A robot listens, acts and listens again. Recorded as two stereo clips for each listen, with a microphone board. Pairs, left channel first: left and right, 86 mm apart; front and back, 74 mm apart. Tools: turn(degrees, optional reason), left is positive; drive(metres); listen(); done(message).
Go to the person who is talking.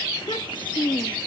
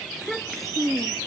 turn(degrees=85, reason="The child speaking: 85° left.")
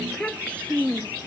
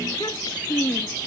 turn(degrees=15, reason="The child speaking is now 15° left.")
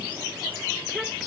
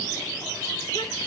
listen()
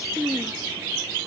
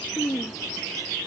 drive(metres=1.0)
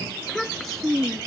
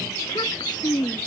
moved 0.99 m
drive(metres=1.0)
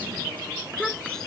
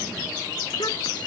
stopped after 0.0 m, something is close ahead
done("Something is in my way. I am facing the child speaking but have not reached it.")